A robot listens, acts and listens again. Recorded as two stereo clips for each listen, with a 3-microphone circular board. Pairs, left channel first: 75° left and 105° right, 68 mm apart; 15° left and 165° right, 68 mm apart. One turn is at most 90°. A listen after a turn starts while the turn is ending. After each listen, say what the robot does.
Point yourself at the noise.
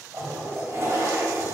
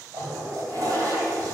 Turn 90° right.
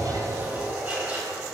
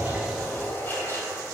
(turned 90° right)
Turn 35° right.
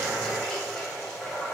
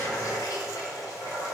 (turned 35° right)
Facing the toilet flushing, 2 to 4 m away.